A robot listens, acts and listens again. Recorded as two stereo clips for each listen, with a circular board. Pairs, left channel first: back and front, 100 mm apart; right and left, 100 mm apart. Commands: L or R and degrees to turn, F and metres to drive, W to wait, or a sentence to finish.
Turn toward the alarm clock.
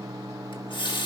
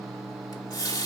W
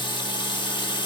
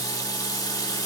W
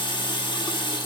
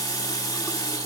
I can't make out an alarm clock, only a running tap.